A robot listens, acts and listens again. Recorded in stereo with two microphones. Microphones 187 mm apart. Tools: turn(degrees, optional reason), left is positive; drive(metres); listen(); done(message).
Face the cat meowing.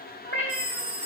turn(degrees=90)
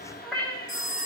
turn(degrees=10, reason="So it is at 10° left.")
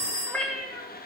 done("Facing the cat meowing, 2 to 4 m away.")